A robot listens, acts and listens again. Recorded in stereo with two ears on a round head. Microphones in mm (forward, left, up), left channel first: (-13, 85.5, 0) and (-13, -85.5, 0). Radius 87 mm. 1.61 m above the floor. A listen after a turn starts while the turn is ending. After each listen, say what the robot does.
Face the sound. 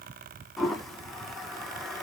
Turn 30° left.
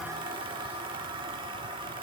Turn 30° right.
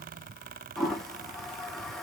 Found it: a toilet flushing, straight ahead.